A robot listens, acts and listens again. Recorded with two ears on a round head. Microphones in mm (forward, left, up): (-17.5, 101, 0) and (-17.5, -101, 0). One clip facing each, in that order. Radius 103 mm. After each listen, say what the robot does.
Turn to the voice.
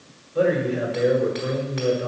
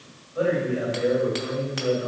Turn 50° left.
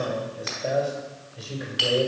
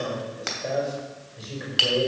Facing the man speaking, over 4 m away.